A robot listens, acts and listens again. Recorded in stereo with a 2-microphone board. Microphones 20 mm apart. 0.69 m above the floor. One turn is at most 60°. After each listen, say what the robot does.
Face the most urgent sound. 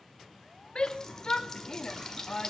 Turn 40° left.
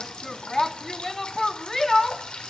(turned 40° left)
Turn 15° left.
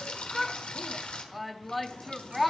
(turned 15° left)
Found it: a shout, straight ahead, under 1 m away.